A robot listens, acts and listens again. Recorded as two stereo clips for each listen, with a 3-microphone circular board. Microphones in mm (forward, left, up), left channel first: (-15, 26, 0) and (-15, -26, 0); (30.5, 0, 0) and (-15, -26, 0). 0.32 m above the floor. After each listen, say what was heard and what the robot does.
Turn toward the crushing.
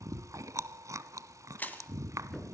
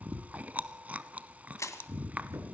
The crushing: 35° left. Turn 35° left.
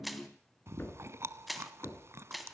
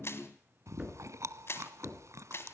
Found it: crushing, straight ahead, 2 to 4 m away.